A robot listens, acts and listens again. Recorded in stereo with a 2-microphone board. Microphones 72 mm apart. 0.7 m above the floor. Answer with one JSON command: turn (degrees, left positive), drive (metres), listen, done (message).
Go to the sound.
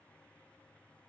{"listen": true}
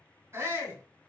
{"turn": -35}
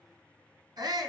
{"turn": -110}
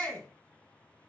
{"turn": 15}
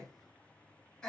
{"drive": 1.0}
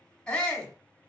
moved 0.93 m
{"turn": 10}
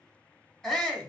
{"drive": 1.0}
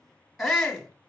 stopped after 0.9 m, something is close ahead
{"done": "I am next to the shout."}